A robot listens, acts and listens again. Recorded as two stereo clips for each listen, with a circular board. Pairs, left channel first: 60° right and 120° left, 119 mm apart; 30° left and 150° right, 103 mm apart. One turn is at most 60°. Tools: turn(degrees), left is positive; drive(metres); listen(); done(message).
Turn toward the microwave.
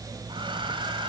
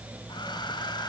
listen()
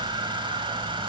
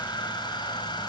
listen()
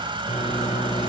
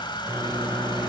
turn(degrees=-60)
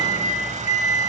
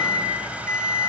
turn(degrees=-35)
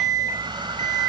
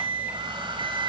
done("Found it: a microwave, straight ahead.")